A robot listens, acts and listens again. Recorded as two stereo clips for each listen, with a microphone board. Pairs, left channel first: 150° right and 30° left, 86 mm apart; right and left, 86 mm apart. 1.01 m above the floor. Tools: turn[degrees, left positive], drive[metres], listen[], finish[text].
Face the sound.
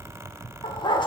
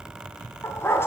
Thought: The dog barking: 150° right.
Action: turn[-150]
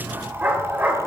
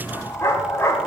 Thought: The dog barking is now 35° right.
Action: turn[-35]
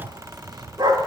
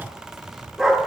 Action: finish[Facing the dog barking, 1 to 2 m away.]